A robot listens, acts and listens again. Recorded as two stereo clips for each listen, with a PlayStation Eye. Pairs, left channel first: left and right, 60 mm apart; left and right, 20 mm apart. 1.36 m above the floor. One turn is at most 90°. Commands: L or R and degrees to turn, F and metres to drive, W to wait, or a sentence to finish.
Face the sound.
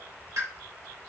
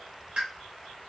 R90
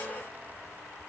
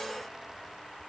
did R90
I heard a pop from this way, but can't make it out now.